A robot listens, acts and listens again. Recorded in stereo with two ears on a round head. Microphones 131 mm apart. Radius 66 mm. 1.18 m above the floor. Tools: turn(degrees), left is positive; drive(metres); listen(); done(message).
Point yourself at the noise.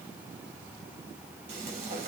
turn(degrees=-50)
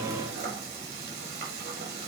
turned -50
turn(degrees=-80)
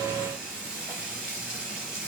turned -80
done("Facing the frying, over 4 m away.")